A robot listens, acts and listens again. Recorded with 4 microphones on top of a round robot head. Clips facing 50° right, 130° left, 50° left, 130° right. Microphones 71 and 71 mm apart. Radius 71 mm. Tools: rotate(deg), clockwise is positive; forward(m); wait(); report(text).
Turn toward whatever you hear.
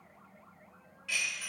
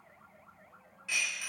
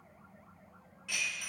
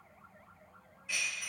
rotate(-60)
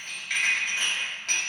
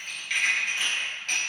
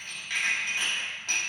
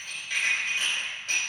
rotate(-10)
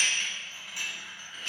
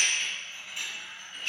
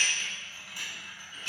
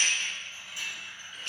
report("Found it: dishes clattering, straight ahead, 1 to 2 m away.")